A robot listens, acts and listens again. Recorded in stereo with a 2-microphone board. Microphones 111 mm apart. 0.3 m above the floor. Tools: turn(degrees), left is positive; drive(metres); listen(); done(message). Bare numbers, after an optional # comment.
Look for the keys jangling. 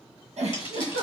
# The keys jangling: about 50° left or 130° left.
turn(50)
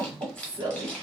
# So it is at 15° left.
turn(15)
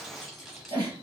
listen()
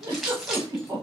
done("Found it: keys jangling, straight ahead.")